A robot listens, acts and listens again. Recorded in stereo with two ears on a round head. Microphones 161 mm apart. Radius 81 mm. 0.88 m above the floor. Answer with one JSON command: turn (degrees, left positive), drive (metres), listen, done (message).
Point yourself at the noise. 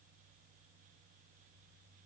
{"listen": true}
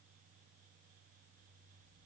{"listen": true}
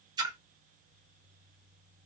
{"turn": -25}
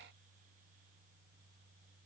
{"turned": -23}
{"listen": true}
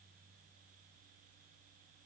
{"done": "I heard a splash, but can't make it out now. It was about straight ahead or 135° right."}